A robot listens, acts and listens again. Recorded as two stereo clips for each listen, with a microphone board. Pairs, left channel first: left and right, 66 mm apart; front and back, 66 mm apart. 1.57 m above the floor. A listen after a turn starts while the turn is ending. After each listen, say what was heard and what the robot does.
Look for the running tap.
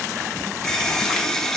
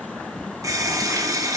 The running tap: 170° left. Turn 170° left.
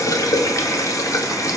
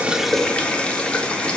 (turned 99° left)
The running tap is now 70° left. Turn 70° left.
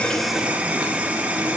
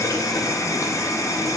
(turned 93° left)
The running tap is now 25° right. Turn 25° right.
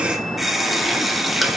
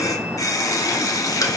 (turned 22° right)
Facing the running tap.